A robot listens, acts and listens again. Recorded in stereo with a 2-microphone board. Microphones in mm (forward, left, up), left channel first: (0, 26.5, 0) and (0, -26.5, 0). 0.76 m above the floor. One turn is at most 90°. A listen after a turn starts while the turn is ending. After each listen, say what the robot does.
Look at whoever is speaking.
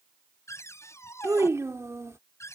Turn 65° right.
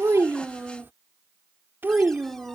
Turn 50° right.
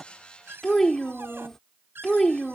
Turn 10° left.
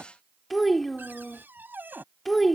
Found it: a child speaking, straight ahead.